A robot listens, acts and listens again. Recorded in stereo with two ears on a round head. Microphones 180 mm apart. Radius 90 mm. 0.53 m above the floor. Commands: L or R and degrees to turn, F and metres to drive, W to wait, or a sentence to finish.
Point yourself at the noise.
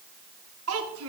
R90
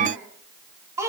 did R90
R15
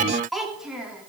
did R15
Facing the child speaking.